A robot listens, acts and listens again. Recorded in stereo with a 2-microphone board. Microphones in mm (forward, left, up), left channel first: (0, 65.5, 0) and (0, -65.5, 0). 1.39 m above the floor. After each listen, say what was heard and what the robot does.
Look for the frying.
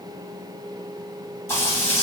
The frying: about 20° left or 160° left. Turn 20° left.
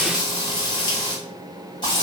So it is at 140° left. Turn 140° left.
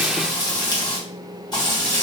The frying is now 30° left. Turn 30° left.
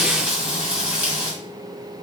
The frying is now 10° right. Turn 10° right.
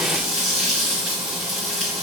Facing the frying.